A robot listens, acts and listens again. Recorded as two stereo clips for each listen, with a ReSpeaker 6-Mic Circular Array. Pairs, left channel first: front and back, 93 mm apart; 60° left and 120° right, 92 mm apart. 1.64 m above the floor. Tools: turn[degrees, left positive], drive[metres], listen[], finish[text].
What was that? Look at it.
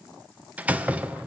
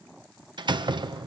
Thought: The door slam: 110° right.
Action: turn[-110]
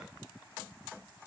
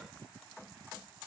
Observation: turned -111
Action: finish[I heard a door slam from this way, but can't make it out now.]